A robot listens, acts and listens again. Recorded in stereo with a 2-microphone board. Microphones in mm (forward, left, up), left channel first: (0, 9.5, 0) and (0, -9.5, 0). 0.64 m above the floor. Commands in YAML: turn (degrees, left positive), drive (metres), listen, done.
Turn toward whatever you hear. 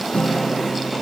turn: 55
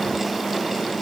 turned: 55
listen: true
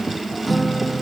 done: "Found it: a guitar, straight ahead."